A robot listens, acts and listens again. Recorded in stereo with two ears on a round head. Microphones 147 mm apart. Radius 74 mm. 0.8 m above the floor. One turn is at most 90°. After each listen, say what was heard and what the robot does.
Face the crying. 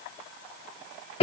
Keep listening.
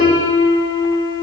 Keep listening.
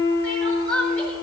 Turn 30° left.
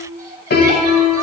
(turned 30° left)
Keep listening.
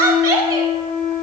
So it is at 25° right. Turn 25° right.
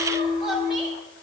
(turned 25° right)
Keep listening.
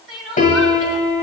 Found it: crying, straight ahead, 1 to 2 m away.